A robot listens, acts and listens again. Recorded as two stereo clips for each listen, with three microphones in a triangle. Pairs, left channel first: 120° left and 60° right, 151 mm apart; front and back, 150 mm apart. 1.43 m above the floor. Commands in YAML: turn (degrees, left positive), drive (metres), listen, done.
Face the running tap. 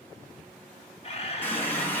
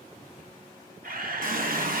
turn: -165
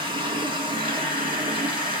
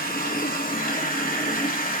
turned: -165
done: "Facing the running tap."